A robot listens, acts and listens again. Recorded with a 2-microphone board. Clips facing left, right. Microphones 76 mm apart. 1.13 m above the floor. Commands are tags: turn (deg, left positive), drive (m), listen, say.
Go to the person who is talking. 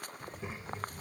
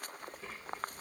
<turn deg="20"/>
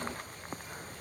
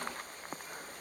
<listen/>
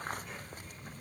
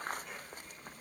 <drive m="1.0"/>
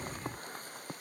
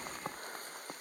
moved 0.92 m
<drive m="1.0"/>
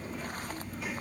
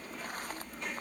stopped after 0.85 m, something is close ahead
<say>I am next to the child speaking.</say>